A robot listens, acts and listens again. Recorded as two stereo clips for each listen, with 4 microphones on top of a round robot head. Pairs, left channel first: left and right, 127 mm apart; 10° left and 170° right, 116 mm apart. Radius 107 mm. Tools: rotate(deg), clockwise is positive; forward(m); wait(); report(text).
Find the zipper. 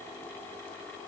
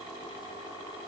wait()
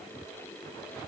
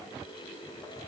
wait()
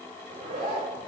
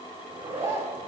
rotate(105)
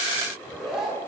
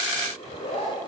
report("Found it: a zipper, straight ahead.")